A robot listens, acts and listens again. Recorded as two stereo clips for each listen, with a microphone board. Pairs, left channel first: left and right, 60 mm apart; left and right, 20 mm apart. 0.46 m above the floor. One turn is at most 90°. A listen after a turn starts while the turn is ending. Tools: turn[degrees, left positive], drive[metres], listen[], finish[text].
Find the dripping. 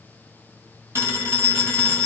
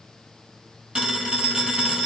Action: listen[]
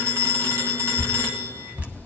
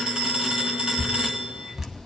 Thought: The dripping: about 25° right or 155° right.
Action: turn[-25]
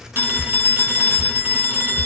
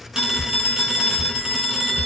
Action: finish[Facing the dripping, under 1 m away.]